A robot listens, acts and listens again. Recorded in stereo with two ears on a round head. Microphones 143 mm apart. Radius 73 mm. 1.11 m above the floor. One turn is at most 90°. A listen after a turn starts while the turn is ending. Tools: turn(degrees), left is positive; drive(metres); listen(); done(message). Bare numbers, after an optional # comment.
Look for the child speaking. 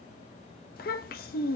# The child speaking: about 70° left or 110° left.
turn(70)
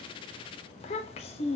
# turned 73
# So it is at 40° left.
turn(40)
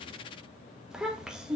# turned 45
done("Facing the child speaking.")